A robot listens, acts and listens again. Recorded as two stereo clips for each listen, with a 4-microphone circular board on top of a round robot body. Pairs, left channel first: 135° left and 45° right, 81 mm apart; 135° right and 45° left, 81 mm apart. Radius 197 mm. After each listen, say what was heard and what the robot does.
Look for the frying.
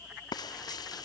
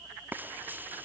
The frying: 110° left. Turn 110° left.
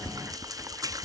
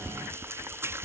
The frying is now 10° right. Turn 10° right.
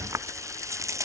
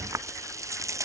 Found it: frying, straight ahead.